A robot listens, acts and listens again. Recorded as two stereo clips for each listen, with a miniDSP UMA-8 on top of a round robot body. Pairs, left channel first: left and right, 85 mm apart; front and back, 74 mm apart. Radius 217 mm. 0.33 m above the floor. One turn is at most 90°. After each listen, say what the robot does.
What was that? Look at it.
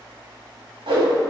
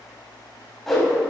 Turn 85° right.
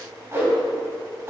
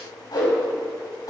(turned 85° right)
Turn 30° right.
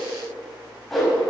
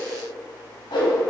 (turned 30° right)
Facing the whoosh, 2 to 4 m away.